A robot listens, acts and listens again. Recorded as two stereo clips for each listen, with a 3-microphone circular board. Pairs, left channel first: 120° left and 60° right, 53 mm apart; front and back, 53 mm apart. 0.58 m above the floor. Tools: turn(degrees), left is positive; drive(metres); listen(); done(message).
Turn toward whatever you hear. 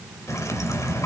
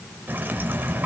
turn(degrees=130)
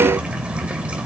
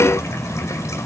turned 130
done("Facing the dripping.")